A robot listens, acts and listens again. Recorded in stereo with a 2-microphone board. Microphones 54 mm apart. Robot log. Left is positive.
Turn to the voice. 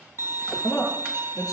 cmd yaw +90
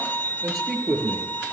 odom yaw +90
end: Found it: a man speaking, straight ahead, over 4 m away.